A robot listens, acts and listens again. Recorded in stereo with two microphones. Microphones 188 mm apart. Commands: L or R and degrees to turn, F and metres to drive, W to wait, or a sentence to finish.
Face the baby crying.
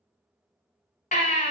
L45
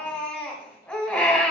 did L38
Found it: a baby crying, straight ahead.